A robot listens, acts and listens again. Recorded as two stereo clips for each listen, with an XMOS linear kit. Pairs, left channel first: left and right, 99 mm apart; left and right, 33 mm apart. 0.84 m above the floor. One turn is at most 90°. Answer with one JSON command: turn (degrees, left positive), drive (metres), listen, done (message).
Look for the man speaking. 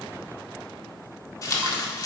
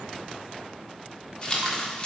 {"listen": true}
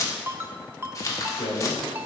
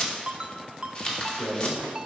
{"turn": 90}
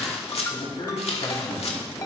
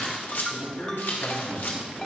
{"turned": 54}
{"turn": 60}
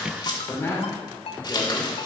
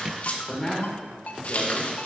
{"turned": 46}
{"turn": 25}
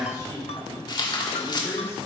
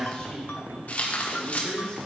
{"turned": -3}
{"turn": 30}
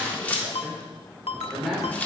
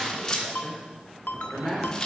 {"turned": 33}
{"done": "Facing the man speaking, 2 to 4 m away."}